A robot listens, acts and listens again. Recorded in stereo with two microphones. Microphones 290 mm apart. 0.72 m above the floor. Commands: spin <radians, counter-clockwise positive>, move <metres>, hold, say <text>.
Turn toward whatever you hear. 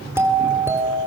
spin -0.52
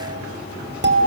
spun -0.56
spin -2.44
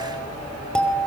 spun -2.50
say Facing the doorbell.